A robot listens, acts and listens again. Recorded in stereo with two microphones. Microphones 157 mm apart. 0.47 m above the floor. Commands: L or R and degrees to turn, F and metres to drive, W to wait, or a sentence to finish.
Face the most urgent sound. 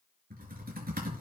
W
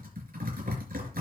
W
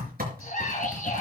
L55
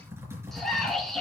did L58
Facing the scream, over 4 m away.